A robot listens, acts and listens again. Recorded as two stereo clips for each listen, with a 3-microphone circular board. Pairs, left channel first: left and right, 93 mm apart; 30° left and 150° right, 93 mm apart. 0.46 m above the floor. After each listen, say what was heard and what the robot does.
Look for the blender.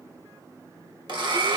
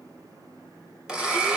The blender: 70° right. Turn 70° right.
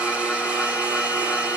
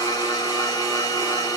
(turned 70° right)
The blender is now 10° right. Turn 10° right.
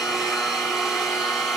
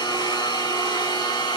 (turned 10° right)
Facing the blender, 1 to 2 m away.